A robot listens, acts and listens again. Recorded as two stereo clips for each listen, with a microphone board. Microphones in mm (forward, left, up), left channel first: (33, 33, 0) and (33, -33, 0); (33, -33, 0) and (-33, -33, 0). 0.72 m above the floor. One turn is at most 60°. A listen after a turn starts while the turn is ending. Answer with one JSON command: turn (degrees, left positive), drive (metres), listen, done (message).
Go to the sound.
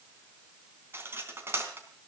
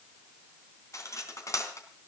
{"turn": -35}
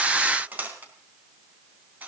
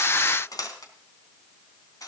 {"turn": -25}
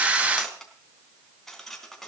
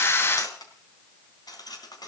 {"drive": 1.0}
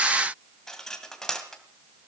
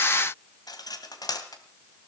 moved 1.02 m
{"turn": 10}
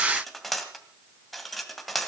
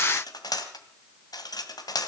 {"drive": 1.0}
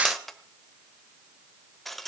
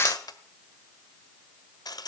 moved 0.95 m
{"drive": 1.0}
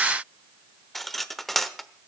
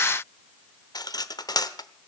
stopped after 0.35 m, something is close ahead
{"done": "Arrived at the cutlery clinking, straight ahead."}